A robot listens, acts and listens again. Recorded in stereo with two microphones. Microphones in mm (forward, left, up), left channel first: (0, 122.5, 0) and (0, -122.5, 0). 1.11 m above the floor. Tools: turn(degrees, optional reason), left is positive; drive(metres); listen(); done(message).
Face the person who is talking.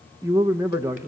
turn(degrees=-30)
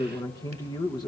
turn(degrees=15, reason="So it is at 15° left.")
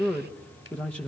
done("Facing the man speaking.")